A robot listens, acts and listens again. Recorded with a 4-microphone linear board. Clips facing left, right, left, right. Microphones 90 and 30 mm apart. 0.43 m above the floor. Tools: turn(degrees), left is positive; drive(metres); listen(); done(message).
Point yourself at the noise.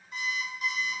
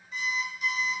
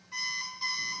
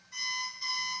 turn(degrees=50)
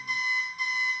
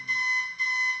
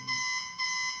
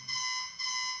turn(degrees=75)
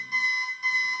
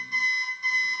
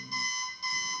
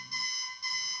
done("Facing the alarm clock, 1 to 2 m away.")